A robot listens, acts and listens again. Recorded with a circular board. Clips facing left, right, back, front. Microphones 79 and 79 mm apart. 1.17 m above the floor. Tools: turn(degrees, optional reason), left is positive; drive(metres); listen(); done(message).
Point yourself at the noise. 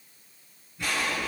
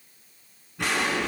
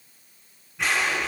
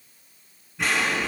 turn(degrees=-90, reason="The explosion: 90° right.")
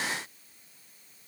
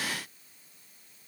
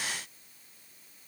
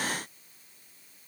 done("I heard an explosion from this way, but can't make it out now.")